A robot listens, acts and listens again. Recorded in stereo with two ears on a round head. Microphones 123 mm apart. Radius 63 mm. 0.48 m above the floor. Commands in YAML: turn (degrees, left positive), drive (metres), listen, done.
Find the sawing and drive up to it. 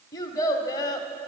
listen: true
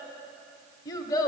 listen: true
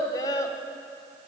done: "I can't make out sawing, only a child speaking."